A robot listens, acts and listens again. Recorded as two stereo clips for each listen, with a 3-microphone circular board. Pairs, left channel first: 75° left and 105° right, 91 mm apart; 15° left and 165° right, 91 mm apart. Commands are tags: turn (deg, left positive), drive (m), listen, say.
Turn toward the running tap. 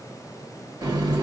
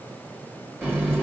<turn deg="-65"/>
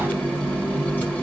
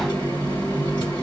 <say>Facing the running tap.</say>